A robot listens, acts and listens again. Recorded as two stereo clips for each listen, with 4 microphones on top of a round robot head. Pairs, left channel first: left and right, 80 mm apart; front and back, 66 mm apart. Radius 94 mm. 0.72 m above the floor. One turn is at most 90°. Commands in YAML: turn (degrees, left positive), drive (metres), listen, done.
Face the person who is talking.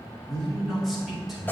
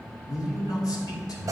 done: "Found it: a man speaking, straight ahead, 2 to 4 m away."